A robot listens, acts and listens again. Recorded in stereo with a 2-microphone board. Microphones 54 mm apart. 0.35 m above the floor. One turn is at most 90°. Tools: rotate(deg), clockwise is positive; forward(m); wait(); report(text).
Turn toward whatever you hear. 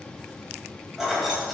rotate(-30)
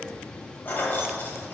rotate(-90)
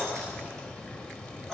rotate(-10)
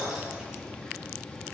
report("Found it: keys jangling, straight ahead.")